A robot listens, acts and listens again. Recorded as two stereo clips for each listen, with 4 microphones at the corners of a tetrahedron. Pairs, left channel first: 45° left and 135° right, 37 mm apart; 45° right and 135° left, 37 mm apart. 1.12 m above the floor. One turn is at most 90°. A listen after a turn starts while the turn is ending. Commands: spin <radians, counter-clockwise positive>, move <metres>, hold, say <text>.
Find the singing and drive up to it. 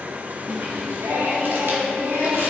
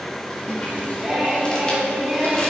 spin -1.57
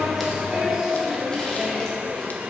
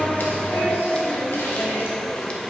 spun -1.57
spin -1.05
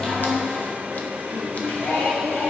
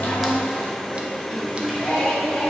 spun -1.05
spin 0.17
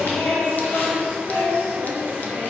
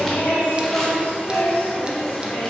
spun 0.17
move 1.0
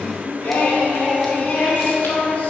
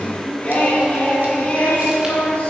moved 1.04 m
move 1.0
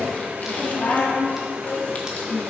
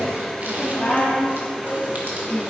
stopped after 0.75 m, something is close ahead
spin 0.17
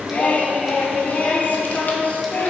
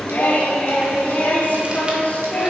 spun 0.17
say I am next to the singing.